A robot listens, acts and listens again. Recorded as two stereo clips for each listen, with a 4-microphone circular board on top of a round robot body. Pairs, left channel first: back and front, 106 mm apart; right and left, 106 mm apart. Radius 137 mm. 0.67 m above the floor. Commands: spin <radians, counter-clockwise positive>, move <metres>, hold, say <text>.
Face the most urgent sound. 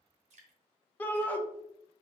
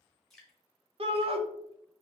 spin 1.83
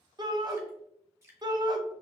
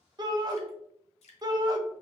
spin 0.79
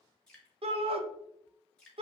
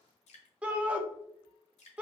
spin 0.26
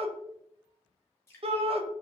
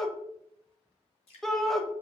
say Facing the shout, under 1 m away.